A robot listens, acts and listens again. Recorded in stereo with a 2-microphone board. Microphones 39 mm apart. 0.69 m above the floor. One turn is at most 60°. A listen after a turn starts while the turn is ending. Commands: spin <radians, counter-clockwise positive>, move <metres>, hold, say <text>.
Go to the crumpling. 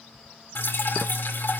hold
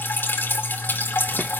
hold
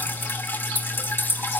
say I can't make out crumpling, only dripping.